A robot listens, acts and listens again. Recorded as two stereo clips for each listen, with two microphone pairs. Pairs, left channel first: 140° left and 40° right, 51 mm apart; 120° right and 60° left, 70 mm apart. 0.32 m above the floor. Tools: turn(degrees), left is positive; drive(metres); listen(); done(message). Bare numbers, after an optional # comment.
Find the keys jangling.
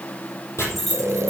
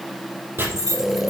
# The keys jangling: 55° left.
turn(55)
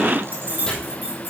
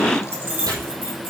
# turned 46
# The keys jangling is now 10° left.
turn(10)
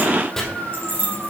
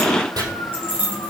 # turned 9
done("Found it: keys jangling, straight ahead, over 4 m away.")